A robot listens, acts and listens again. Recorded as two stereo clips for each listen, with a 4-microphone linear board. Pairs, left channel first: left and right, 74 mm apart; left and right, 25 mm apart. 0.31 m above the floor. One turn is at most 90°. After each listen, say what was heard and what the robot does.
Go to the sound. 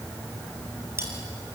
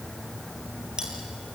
The cutlery clinking: about 35° right or 145° right. Turn 35° right.
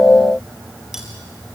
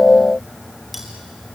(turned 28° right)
Drive 1.0 m forward.
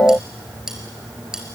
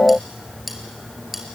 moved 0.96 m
The cutlery clinking is now 10° right. Turn 10° right.
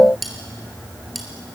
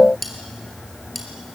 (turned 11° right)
Drive 1.0 m forward.
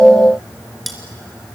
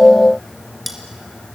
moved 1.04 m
Drive 1.0 m forward.
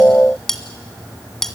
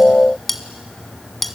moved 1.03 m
Drive 1.0 m forward.
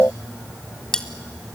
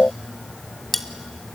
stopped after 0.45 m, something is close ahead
The cutlery clinking is now 10° left. Turn 10° left.
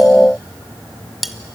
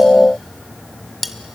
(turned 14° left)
I am next to the cutlery clinking.